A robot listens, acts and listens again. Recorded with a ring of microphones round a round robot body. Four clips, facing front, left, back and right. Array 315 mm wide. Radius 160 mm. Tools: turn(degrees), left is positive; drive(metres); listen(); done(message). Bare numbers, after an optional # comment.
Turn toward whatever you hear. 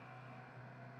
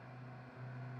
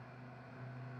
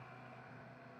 listen()
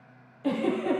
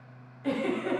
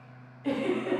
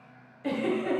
# The giggle: 30° right.
turn(-30)
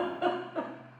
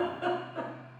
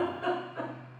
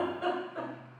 done("Facing the giggle, 2 to 4 m away.")